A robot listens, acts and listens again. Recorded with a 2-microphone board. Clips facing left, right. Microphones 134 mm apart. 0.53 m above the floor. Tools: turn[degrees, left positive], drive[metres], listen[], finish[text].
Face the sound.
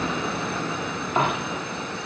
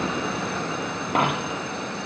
Thought: The dropped coin: about 70° right or 110° right.
Action: turn[-70]
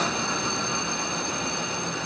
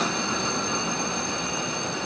Action: listen[]
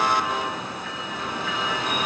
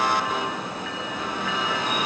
Action: finish[I heard a dropped coin, but can't make it out now. It was about straight ahead or 40° right.]